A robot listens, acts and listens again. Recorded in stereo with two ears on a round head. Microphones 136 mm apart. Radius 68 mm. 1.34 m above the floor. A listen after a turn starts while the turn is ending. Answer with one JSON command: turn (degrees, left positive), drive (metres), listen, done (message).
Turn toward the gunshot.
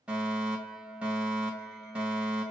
{"listen": true}
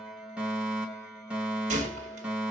{"turn": -50}
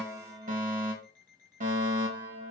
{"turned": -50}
{"listen": true}
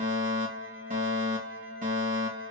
{"done": "I heard a gunshot, but can't make it out now. It was about straight ahead or 80° right."}